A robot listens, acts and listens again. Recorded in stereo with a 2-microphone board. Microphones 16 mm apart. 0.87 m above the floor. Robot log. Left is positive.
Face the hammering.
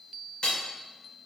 cmd yaw +90
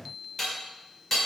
note: So it is at 10° left.
cmd yaw +10
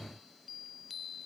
cmd idle
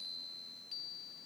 cmd idle
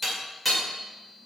end: Facing the hammering.